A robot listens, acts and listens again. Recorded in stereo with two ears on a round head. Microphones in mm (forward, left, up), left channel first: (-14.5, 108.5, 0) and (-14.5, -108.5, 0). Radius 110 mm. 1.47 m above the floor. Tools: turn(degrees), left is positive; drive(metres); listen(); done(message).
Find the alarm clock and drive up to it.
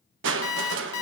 turn(degrees=60)
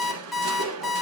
drive(metres=1.0)
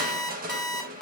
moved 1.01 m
drive(metres=1.0)
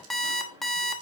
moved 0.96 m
drive(metres=1.0)
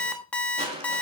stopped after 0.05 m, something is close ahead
done("I am next to the alarm clock.")